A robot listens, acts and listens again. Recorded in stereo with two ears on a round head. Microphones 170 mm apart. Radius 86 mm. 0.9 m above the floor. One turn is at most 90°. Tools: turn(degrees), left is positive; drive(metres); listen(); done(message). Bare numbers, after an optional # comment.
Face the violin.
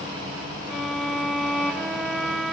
turn(30)
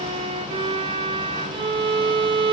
# So it is at 30° right.
turn(-30)
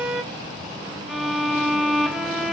done("Facing the violin, under 1 m away.")